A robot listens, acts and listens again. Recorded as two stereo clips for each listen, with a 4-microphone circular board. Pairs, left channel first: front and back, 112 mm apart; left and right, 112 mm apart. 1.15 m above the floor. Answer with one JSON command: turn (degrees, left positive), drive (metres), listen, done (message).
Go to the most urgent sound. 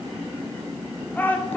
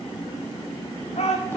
{"turn": 75}
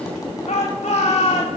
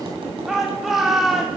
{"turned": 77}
{"drive": 1.0}
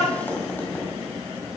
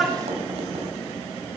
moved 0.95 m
{"drive": 1.0}
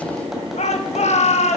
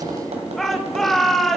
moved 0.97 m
{"drive": 1.0}
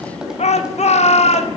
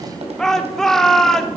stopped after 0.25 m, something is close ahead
{"done": "I am next to the shout."}